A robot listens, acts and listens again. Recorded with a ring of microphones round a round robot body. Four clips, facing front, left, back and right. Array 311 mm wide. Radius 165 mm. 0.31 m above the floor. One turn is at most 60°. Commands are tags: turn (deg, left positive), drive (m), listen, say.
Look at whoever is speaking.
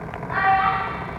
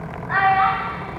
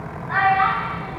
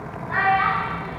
<turn deg="60"/>
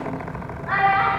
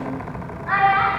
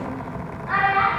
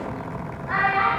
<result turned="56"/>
<turn deg="55"/>
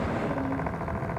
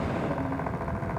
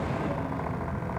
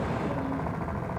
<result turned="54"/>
<listen/>
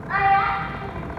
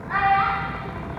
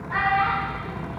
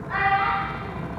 <say>Facing the child speaking, 2 to 4 m away.</say>